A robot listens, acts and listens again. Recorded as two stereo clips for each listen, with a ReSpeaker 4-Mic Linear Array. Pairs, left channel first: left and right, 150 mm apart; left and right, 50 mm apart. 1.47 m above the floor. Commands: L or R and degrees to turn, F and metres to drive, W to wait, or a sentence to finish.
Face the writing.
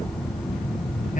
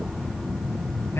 W
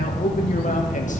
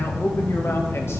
W
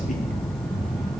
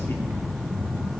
I can't make out writing to turn to.